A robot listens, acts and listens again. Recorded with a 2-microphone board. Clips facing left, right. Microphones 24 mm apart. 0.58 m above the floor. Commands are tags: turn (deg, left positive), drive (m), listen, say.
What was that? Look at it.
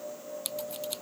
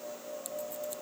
<turn deg="70"/>
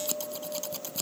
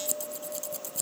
<turn deg="40"/>
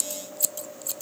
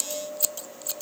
<turn deg="-10"/>
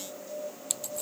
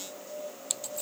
<say>Found it: scissors, straight ahead.</say>